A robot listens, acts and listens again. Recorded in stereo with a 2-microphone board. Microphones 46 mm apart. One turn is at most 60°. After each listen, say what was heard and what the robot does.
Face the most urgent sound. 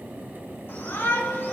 The shout: about 55° left or 125° left. Turn 55° left.
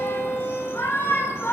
So it is at 65° left. Turn 60° left.
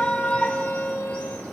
The shout is now 30° left. Turn 30° left.
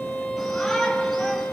Keep listening.
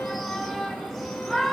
Facing the shout, over 4 m away.